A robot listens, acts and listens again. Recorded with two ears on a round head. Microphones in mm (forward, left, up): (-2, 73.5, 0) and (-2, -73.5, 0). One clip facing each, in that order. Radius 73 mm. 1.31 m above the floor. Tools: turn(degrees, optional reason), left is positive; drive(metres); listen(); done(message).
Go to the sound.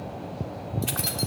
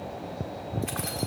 turn(degrees=40, reason="The keys jangling: about 40° left or 140° left.")
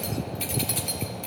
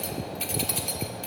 drive(metres=1.0)
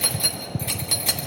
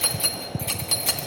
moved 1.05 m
drive(metres=1.0)
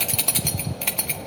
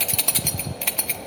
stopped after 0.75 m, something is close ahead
done("Arrived at the keys jangling, straight ahead.")